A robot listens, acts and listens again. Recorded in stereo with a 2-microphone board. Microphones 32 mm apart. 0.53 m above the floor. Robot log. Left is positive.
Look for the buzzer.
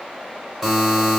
cmd yaw -30
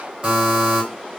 note: So it is at 145° right.
cmd yaw -145
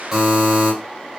note: The buzzer is now 10° right.
cmd yaw -10
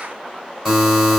end: Found it: a buzzer, straight ahead, 2 to 4 m away.